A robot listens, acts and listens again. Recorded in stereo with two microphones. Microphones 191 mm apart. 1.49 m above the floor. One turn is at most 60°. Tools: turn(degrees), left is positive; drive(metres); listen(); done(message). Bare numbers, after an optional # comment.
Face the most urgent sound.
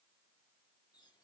listen()
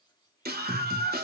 # The scream: about 55° right or 125° right.
turn(-55)
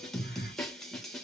done("Facing the scream, 2 to 4 m away.")